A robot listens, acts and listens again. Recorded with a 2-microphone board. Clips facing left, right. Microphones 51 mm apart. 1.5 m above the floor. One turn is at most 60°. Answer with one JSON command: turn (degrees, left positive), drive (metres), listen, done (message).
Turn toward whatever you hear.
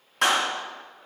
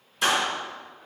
{"turn": 60}
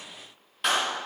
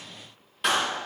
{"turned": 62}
{"done": "Facing the clap, 2 to 4 m away."}